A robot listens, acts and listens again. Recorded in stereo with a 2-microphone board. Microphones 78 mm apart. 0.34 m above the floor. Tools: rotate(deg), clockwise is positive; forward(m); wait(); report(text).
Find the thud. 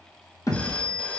rotate(-45)
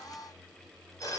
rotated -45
wait()
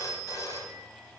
report("I heard a thud, but can't make it out now. It was about straight ahead or 90° left.")